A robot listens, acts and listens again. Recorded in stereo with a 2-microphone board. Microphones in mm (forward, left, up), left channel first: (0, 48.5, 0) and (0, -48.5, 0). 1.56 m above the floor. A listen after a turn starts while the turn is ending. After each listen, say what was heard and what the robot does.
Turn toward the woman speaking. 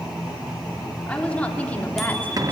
The woman speaking: about 20° left or 160° left. Turn 20° left.
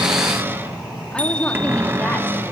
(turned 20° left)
Keep listening.
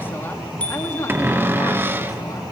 The woman speaking: about 35° left or 145° left. Turn 35° left.
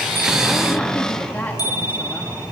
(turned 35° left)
The woman speaking: about 20° left or 160° left. Turn 20° left.
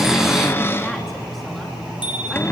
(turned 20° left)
Keep listening.
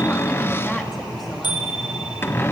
Keep listening.
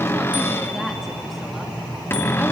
I heard a woman speaking, but can't make it out now. It was about straight ahead or 140° left.